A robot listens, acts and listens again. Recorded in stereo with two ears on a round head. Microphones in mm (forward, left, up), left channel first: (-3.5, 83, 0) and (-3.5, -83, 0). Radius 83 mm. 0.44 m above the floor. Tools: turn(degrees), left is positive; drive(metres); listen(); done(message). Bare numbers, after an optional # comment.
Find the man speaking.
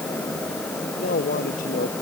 # The man speaking: about 45° left or 135° left.
turn(45)
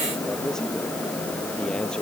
done("Found it: a man speaking, straight ahead.")